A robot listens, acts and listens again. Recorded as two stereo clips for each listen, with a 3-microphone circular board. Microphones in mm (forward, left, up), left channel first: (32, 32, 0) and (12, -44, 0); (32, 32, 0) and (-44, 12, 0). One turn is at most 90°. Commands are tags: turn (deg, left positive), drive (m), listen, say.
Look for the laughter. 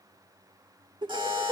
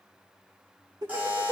<turn deg="-90"/>
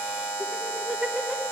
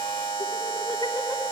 <turn deg="-15"/>
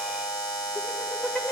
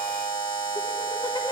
<listen/>
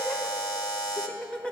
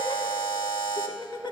<say>Found it: laughter, straight ahead.</say>